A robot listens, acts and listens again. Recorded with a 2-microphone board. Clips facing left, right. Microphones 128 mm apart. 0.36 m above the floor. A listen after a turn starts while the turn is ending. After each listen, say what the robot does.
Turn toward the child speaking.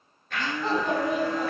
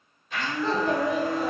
Turn 25° left.
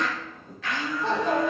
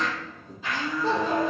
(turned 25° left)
Turn 110° left.
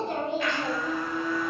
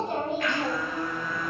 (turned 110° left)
Keep listening.
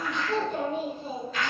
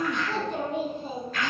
Turn 75° right.
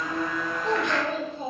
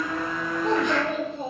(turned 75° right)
Turn 45° right.
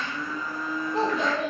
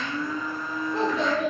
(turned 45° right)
Turn 20° left.
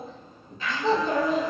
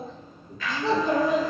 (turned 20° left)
Found it: a child speaking, straight ahead.